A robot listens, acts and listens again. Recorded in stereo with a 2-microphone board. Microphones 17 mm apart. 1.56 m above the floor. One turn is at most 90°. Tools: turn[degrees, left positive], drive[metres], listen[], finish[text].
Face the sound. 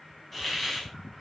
Action: turn[30]
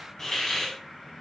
Thought: So it is at 145° left.
Action: turn[90]
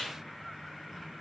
Thought: The hiss is now 85° left.
Action: turn[85]
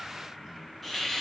Action: finish[Facing the hiss.]